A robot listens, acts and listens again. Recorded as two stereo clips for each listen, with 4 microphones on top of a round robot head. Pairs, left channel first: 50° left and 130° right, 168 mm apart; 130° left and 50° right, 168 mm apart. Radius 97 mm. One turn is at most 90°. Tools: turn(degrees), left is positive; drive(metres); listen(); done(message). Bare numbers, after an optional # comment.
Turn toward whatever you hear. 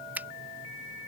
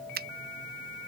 # The finger snap: 50° right.
turn(-50)
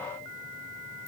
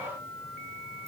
listen()
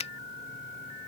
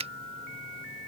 done("Facing the finger snap.")